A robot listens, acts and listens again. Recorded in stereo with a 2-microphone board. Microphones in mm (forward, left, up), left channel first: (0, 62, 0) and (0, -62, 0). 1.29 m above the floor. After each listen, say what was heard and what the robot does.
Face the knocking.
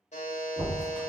The knocking: about 65° right or 115° right. Turn 65° right.
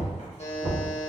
So it is at 50° right. Turn 50° right.
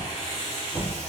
The knocking is now 10° right. Turn 10° right.
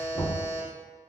Facing the knocking, 1 to 2 m away.